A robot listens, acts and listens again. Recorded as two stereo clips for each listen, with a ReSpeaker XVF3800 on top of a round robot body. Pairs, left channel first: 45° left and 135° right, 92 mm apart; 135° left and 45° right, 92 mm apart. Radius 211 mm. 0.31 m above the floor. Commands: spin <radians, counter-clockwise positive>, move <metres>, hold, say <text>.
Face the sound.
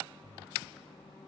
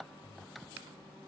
hold
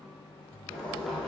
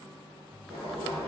spin -0.70
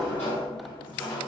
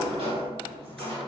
spin -0.44
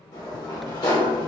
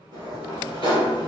say Facing the sliding door, 1 to 2 m away.